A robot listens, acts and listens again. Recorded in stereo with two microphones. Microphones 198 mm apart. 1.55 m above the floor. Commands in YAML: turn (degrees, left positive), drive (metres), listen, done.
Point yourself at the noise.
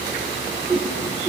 turn: -30
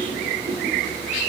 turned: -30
turn: -140
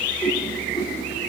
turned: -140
turn: 20
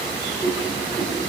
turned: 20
done: "Facing the whoosh, 2 to 4 m away."